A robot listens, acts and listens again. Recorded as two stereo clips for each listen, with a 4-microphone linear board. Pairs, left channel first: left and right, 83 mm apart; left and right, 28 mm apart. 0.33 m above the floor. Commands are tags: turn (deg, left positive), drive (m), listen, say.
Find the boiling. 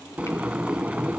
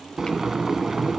<turn deg="-15"/>
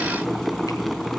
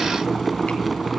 <say>Found it: boiling, straight ahead, under 1 m away.</say>